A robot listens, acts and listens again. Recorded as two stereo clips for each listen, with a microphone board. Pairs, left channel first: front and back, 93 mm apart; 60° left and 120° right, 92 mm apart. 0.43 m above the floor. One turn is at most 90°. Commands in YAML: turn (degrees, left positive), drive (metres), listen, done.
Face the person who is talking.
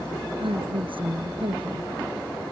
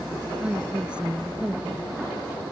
turn: 90
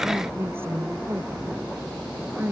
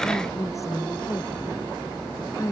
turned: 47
turn: 90
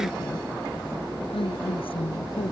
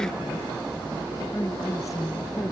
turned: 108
done: "Found it: a woman speaking, straight ahead."